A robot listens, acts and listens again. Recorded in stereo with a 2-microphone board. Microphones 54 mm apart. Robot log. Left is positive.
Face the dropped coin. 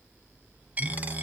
note: The dropped coin: about 30° right or 150° right.
cmd yaw -30
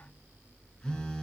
cmd idle
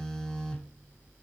end: I heard a dropped coin, but can't make it out now. It was about straight ahead or 120° right.